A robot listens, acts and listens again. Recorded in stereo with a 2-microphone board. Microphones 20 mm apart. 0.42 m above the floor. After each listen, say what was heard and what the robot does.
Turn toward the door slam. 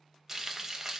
Keep listening.
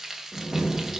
The door slam: about 45° right or 135° right. Turn 45° right.
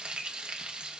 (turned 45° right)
Keep listening.
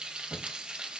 I heard a door slam, but can't make it out now. It was about straight ahead or 90° right.